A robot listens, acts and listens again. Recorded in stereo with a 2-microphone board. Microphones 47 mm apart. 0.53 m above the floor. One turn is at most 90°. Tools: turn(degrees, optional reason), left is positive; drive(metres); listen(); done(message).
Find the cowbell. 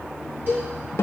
turn(degrees=-40, reason="The cowbell: about 40° right or 140° right.")
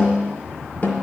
listen()
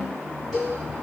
done("Facing the cowbell, 2 to 4 m away.")